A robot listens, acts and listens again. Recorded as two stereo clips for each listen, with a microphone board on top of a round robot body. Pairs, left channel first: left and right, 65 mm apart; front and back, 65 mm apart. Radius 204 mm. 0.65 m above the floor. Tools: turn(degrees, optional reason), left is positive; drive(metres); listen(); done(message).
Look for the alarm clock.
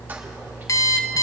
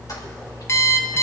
turn(degrees=50, reason="The alarm clock: 50° left.")
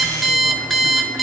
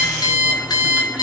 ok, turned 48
done("Facing the alarm clock, 1 to 2 m away.")